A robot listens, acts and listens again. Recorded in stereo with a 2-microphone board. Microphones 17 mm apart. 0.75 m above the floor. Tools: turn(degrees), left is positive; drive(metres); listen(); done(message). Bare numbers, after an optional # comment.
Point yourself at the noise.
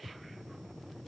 listen()
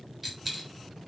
turn(-30)
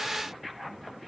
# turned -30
listen()
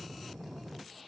done("I heard a dropped coin, but can't make it out now. It was about 25° left or 145° right.")